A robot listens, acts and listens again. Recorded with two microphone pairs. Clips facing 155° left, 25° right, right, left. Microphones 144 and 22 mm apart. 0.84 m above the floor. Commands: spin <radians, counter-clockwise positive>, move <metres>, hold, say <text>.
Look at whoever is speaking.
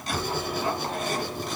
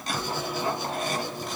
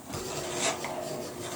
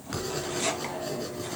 hold
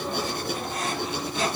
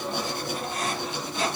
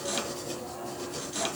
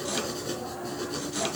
hold
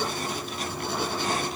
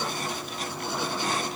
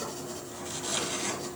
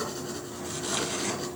say I can't make out anyone speaking, only writing.